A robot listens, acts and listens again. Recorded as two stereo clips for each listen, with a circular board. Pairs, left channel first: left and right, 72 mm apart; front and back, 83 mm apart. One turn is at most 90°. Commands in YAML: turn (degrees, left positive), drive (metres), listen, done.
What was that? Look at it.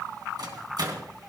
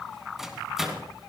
turn: -90
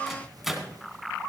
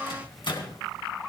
done: "Found it: a microwave, straight ahead."